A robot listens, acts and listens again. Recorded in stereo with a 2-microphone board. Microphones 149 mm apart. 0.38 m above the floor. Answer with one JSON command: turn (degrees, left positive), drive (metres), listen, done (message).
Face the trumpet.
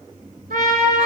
{"turn": -75}
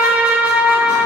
{"turn": -10}
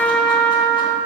{"done": "Found it: a trumpet, straight ahead, under 1 m away."}